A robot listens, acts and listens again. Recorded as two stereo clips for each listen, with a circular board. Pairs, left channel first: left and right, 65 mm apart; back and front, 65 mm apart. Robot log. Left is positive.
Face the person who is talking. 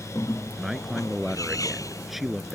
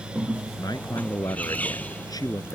note: The man speaking: straight behind.
cmd yaw +180
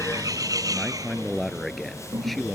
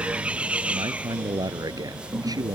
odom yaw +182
end: Found it: a man speaking, straight ahead.